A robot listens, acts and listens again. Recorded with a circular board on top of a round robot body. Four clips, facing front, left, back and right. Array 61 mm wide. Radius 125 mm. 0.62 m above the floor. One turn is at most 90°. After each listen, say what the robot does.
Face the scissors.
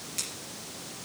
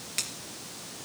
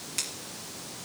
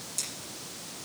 Turn 90° left.
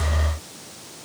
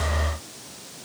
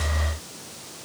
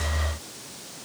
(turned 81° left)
Turn 20° left.
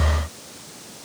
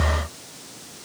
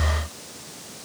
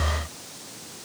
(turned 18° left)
Keep listening.
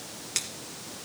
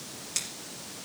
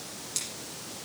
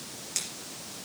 Facing the scissors.